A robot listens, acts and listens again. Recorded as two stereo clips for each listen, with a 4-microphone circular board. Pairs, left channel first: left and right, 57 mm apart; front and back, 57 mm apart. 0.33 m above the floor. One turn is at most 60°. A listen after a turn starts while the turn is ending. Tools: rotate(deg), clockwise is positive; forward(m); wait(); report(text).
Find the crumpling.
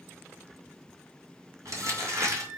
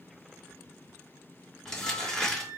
rotate(60)
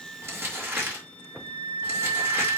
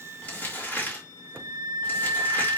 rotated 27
rotate(50)
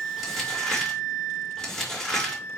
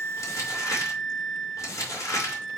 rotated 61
rotate(-10)
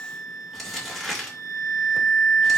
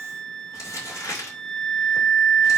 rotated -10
report("Found it: crumpling, straight ahead, over 4 m away.")